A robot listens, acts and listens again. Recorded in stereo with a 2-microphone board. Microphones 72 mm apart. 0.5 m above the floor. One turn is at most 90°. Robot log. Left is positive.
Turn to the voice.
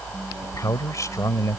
note: The man speaking: about 50° left or 130° left.
cmd yaw +50
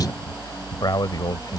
note: So it is at 75° left.
cmd yaw +75
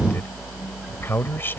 note: The man speaking is now 30° left.
cmd yaw +30
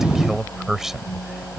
end: Facing the man speaking.